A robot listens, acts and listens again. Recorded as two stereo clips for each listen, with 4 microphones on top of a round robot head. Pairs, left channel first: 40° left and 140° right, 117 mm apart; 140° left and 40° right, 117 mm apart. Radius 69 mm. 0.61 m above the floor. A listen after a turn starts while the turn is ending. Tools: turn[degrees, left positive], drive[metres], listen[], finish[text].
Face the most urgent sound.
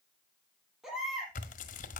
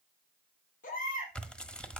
Thought: The baby crying: 135° left.
Action: turn[135]
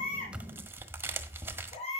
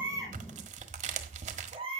Action: finish[Facing the baby crying, over 4 m away.]